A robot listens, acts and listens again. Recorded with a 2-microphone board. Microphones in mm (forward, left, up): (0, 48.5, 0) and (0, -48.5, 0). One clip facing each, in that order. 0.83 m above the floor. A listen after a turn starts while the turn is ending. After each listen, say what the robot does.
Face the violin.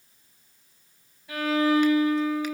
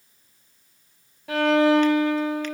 Turn 90° right.
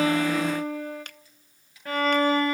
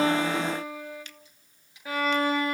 Facing the violin.